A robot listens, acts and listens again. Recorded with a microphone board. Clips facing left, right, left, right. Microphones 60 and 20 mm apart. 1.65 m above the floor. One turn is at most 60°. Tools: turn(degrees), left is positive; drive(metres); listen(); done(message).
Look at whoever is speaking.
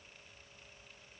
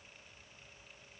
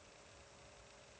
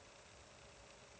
listen()
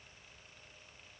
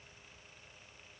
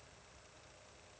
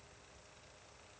listen()
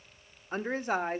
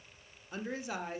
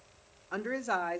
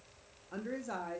turn(degrees=45)
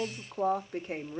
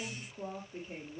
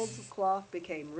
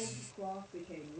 turn(degrees=60)
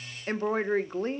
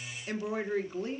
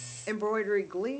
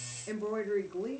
turn(degrees=45)
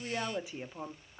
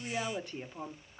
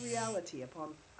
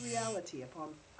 done("Facing the woman speaking.")